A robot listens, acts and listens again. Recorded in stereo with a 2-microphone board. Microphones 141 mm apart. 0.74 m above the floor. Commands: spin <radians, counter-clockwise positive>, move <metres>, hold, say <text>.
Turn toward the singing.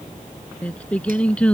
spin 0.52
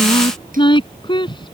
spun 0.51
spin 2.53
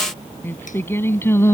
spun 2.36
spin 0.35
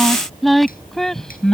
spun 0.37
say Found it: singing, straight ahead.